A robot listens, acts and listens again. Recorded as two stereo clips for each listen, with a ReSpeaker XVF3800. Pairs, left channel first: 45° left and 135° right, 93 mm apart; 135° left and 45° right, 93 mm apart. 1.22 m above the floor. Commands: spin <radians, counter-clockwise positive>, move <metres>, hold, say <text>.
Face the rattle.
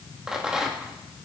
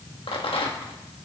spin 2.44
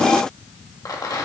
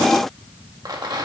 say Found it: a rattle, straight ahead, 1 to 2 m away.